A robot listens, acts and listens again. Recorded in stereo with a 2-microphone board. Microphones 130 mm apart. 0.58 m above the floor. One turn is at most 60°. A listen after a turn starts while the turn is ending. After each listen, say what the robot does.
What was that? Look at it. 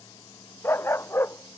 Turn 20° left.
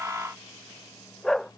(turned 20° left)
Turn 30° left.
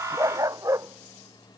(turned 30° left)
Turn 25° right.
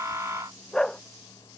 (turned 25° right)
Found it: a dog barking, straight ahead.